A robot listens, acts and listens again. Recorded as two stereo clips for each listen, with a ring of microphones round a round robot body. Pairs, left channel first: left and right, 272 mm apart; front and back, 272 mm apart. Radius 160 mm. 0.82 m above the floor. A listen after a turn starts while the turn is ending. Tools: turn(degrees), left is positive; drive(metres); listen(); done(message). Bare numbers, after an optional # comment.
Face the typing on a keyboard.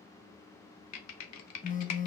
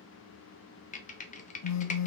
# The typing on a keyboard: 65° left.
turn(65)
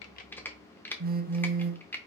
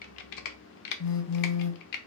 done("Found it: typing on a keyboard, straight ahead.")